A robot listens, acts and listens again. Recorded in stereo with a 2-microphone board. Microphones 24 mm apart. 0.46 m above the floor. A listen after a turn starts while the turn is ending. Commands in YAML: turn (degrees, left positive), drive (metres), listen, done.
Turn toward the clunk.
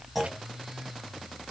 turn: -30
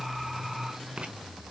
listen: true
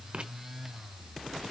done: "I heard a clunk, but can't make it out now. It was about 20° left or 140° right."